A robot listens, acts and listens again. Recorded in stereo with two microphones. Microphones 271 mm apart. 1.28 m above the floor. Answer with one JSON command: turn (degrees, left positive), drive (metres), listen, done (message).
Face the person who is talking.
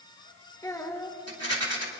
{"turn": 30}
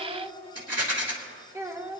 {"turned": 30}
{"turn": -15}
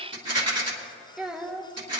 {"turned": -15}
{"done": "Found it: a child speaking, straight ahead."}